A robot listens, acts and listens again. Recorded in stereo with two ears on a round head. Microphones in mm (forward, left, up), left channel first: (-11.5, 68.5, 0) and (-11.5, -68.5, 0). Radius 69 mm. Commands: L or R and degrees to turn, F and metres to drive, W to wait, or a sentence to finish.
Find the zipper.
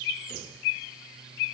W
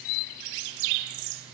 W
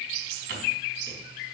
I can't make out a zipper to turn to.